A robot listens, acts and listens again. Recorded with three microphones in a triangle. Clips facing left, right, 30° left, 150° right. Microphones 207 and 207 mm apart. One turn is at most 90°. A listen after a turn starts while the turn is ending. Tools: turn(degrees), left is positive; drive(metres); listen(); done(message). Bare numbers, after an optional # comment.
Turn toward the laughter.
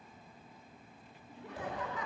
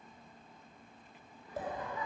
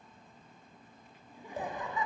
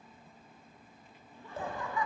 # The laughter: 95° left.
turn(90)
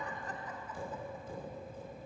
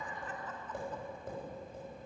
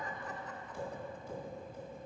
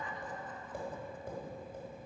listen()
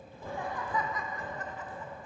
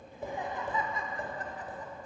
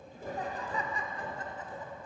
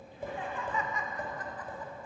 # The laughter is now 35° right.
turn(-35)
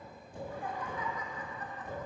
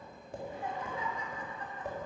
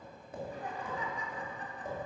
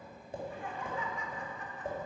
# The laughter is now 30° right.
turn(-30)
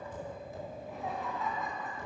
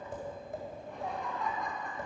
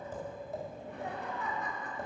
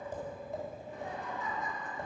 done("Facing the laughter, 1 to 2 m away.")